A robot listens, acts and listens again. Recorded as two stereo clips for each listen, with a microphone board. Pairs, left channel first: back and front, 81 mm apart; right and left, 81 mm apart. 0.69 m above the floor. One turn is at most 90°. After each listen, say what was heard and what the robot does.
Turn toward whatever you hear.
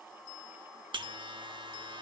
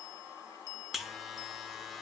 Found it: a buzzer, straight ahead.